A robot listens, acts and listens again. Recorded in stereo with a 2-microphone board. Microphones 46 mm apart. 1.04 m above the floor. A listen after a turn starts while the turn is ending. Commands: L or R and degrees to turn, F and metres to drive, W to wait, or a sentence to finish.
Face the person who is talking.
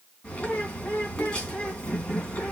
W
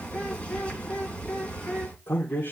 L45
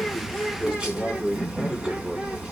R15
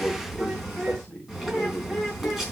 Found it: a man speaking, straight ahead, 2 to 4 m away.